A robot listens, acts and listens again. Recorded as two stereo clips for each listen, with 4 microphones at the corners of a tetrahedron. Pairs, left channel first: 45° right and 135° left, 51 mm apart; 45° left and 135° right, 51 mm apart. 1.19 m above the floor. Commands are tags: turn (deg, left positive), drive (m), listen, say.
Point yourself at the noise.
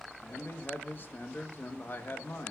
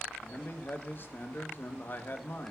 <say>Found it: a man speaking, straight ahead, 1 to 2 m away.</say>